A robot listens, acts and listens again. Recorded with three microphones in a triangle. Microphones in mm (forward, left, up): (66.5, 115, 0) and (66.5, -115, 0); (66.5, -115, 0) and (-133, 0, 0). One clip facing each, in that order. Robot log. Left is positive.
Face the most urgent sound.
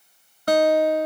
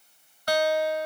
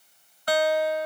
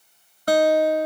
cmd idle
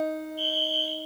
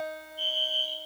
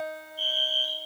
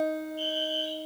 note: The fire alarm: 85° left.
cmd yaw +85
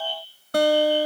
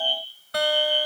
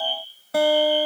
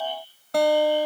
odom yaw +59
note: The fire alarm is now 25° left.
cmd yaw +25
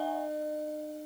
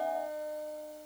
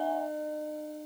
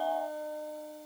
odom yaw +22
cmd idle
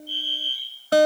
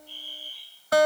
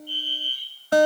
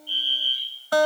end: Found it: a fire alarm, straight ahead.